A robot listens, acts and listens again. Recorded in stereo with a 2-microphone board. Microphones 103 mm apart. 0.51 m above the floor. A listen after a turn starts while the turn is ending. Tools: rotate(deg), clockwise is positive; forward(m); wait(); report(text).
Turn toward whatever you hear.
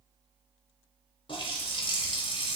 rotate(-55)
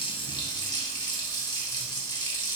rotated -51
rotate(-50)
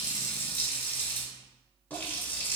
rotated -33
rotate(-20)
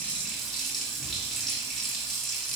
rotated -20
report("Facing the running tap.")